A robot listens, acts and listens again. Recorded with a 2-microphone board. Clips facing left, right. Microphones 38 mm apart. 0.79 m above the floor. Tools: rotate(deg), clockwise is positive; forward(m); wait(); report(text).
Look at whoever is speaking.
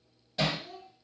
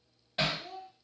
rotate(90)
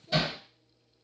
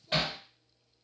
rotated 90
report("Found it: a child speaking, straight ahead, 1 to 2 m away.")